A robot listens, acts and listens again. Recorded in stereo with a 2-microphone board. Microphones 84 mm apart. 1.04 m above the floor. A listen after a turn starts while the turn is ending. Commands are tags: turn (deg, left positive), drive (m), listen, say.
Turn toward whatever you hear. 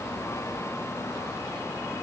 <listen/>
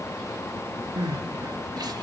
<turn deg="-50"/>
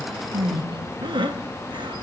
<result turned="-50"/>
<turn deg="-75"/>
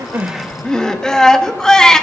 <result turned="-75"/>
<turn deg="10"/>
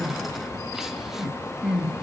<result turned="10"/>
<say>Found it: crying, straight ahead.</say>